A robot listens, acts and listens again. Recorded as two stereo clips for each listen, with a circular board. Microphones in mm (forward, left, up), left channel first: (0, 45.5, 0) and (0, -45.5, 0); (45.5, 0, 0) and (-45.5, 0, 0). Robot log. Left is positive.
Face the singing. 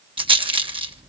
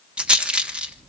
cmd idle
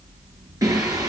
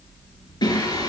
note: The singing: 40° right.
cmd yaw -40
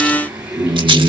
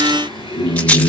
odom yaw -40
note: The singing is now 15° right.
cmd yaw -15
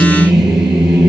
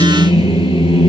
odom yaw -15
note: The singing is now 10° right.
cmd yaw -10
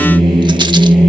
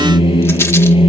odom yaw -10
end: Found it: singing, straight ahead, over 4 m away.